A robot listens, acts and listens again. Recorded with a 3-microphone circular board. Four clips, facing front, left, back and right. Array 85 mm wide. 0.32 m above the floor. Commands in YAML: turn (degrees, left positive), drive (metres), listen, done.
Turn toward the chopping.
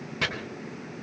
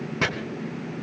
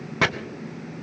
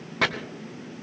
turn: -160
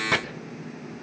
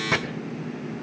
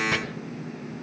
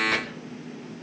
turn: 35
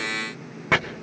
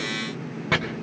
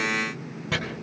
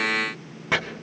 done: "Found it: chopping, straight ahead, 2 to 4 m away."